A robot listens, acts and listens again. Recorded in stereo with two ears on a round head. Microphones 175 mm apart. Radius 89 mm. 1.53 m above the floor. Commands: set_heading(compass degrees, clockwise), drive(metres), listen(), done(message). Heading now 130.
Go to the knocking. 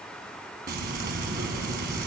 listen()
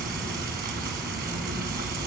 listen()
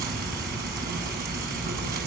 done("I can't make out knocking to turn to.")